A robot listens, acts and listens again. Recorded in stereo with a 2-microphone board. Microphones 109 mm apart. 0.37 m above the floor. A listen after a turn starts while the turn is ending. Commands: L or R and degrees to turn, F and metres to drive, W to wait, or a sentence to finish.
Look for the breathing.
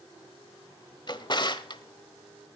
W
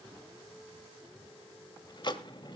W
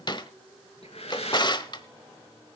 L65
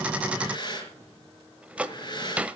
L45
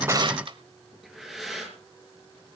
Facing the breathing.